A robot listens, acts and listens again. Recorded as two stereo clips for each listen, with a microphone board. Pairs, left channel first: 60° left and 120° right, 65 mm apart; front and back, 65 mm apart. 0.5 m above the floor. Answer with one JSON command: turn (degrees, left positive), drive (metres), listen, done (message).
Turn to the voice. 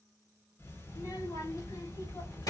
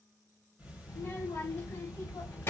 {"turn": 50}
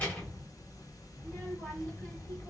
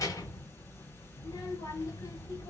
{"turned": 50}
{"done": "Facing the child speaking, 1 to 2 m away."}